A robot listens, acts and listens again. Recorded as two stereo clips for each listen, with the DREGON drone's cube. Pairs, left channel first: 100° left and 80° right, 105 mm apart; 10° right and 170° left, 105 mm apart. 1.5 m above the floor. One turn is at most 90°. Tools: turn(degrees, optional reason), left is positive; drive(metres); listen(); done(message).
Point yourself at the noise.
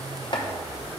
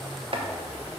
turn(degrees=90, reason="The chopping: 140° left.")
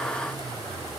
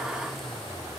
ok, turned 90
turn(degrees=50, reason="Nothing new. It was at 50° left.")
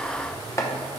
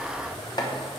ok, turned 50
turn(degrees=35, reason="The chopping is now 35° left.")
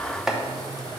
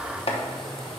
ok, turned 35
turn(degrees=10, reason="The chopping is now 10° left.")
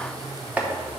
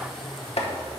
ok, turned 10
done("Found it: chopping, straight ahead, under 1 m away.")